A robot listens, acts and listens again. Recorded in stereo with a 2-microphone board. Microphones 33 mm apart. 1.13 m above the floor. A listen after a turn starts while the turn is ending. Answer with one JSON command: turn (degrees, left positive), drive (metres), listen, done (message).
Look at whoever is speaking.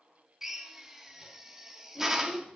{"turn": 75}
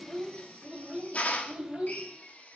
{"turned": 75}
{"turn": -15}
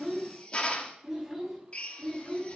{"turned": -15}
{"done": "Facing the child speaking."}